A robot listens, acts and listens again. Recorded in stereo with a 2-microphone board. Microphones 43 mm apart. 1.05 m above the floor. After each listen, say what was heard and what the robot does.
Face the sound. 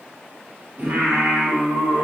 The singing: about 55° right or 125° right. Turn 55° right.
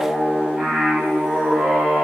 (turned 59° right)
So it is at 30° right. Turn 30° right.
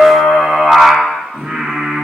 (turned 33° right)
The singing is now 30° right. Turn 30° right.
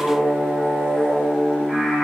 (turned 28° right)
Facing the singing, 1 to 2 m away.